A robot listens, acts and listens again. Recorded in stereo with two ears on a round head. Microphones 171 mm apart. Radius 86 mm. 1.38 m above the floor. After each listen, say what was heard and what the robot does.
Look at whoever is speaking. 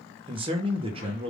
The man speaking: about 30° right or 150° right. Turn 30° right.
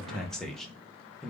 Facing the man speaking.